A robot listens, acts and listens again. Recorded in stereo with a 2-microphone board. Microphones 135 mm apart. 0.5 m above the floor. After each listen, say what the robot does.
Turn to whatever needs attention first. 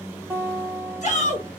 Turn 60° left.
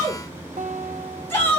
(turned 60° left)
Turn 20° left.
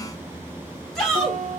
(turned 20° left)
Found it: a shout, straight ahead, 1 to 2 m away.